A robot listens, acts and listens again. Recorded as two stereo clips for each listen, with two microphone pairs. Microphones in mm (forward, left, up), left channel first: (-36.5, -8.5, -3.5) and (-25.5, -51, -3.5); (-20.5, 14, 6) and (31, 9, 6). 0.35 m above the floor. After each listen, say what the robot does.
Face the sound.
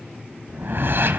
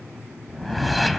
Turn 95° right.
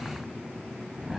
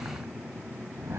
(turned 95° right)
Facing the whoosh, 1 to 2 m away.